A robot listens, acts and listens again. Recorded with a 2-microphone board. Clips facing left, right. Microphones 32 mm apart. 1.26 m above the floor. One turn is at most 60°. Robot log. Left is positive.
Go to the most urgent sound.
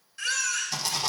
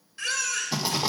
cmd yaw -30
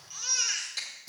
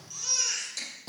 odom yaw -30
note: So it is at 20° left.
cmd yaw +20
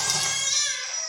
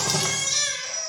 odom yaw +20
cmd fwd 1.0
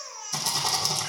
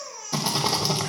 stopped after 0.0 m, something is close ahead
end: Blocked. The baby crying is further on, straight ahead.